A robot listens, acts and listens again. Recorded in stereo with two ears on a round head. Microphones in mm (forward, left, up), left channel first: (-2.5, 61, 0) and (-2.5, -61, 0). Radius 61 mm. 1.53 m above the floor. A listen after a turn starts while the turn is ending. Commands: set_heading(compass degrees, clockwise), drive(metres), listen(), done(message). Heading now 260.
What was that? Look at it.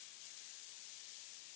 listen()
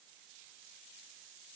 listen()
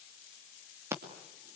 set_heading(280)
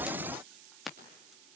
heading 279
done("Facing the scissors.")